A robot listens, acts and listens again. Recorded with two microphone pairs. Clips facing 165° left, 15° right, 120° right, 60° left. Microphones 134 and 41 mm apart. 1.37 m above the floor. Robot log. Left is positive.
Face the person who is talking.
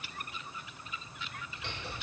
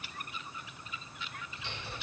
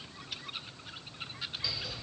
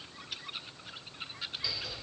cmd idle
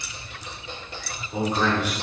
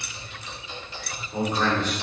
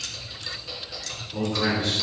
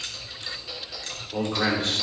note: The man speaking: 90° left.
cmd yaw +90
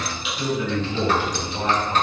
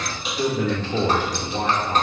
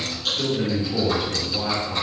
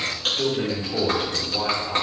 note: The man speaking is now 15° right.
cmd yaw -15
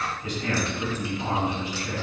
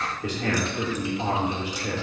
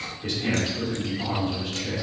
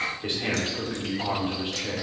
end: Found it: a man speaking, straight ahead, 2 to 4 m away.